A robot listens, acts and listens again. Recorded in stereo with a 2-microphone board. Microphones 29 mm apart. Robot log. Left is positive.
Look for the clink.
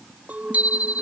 note: The clink: about 65° right or 115° right.
cmd yaw -65
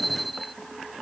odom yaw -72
cmd idle
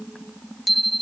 cmd idle
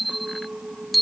note: So it is at 45° right.
cmd yaw -45
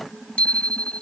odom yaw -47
cmd idle
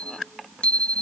cmd idle
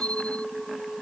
end: Found it: a clink, straight ahead.